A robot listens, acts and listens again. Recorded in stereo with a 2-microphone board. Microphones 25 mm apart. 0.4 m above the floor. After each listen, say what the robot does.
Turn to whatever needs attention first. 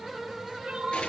Turn 45° right.
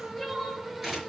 Found it: crying, straight ahead, 2 to 4 m away.